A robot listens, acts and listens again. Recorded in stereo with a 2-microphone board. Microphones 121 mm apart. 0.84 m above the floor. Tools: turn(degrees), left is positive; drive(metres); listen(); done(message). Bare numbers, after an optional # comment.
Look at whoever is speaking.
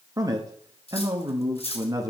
# The man speaking: about 30° right or 150° right.
turn(-30)
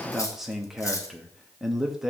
done("Facing the man speaking, under 1 m away.")